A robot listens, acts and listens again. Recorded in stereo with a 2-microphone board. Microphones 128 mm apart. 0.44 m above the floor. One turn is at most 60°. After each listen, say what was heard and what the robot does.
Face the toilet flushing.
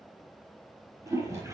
The toilet flushing: about 25° right or 155° right. Turn 25° right.
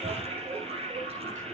So it is at 130° right. Turn 60° right.
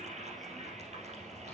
The toilet flushing is now 65° right. Turn 60° right.
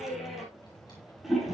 Facing the toilet flushing.